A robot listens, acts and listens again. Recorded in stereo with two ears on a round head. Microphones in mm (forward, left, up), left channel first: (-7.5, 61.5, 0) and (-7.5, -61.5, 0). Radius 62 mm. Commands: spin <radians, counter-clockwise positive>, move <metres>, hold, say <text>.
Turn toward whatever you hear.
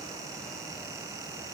hold
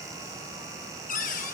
spin 1.05
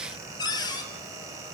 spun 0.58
spin 0.52
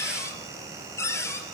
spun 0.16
spin 0.35
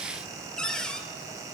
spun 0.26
say Facing the cupboard door.